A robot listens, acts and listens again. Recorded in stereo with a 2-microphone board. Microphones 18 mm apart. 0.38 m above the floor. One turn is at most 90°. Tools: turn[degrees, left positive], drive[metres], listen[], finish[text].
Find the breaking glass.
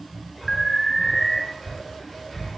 Action: listen[]
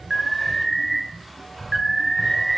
Action: listen[]
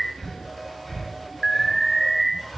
Action: finish[I can't make out breaking glass, only breathing and an alarm.]